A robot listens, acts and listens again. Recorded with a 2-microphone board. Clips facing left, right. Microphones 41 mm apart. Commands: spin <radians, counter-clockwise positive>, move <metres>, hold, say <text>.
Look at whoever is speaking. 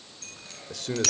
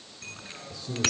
spin 1.31
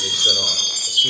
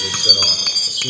hold
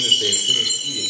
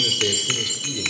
hold
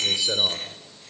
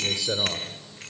say Found it: a man speaking, straight ahead, 2 to 4 m away.